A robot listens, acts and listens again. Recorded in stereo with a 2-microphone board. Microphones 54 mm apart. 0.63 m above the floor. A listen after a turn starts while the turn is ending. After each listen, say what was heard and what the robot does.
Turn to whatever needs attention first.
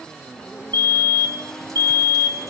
The fire alarm: about 55° left or 125° left. Turn 55° left.
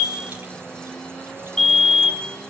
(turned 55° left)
So it is at 10° left. Turn 10° left.
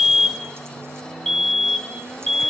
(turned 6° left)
Facing the fire alarm.